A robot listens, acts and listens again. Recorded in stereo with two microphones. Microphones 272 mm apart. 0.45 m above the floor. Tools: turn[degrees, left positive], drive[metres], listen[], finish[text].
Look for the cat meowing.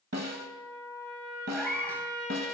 Action: turn[30]
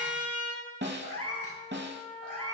Thought: So it is at 110° left.
Action: turn[110]
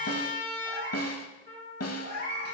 Thought: The cat meowing is now 40° right.
Action: turn[-40]
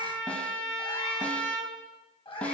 Thought: The cat meowing is now 20° left.
Action: turn[20]
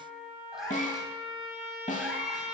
Action: finish[Found it: a cat meowing, straight ahead, 1 to 2 m away.]